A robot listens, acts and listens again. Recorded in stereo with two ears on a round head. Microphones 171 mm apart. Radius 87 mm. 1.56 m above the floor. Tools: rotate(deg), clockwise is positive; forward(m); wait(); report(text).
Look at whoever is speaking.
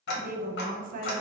rotate(45)
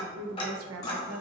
rotate(85)
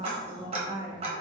rotate(20)
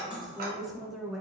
report("Facing the woman speaking.")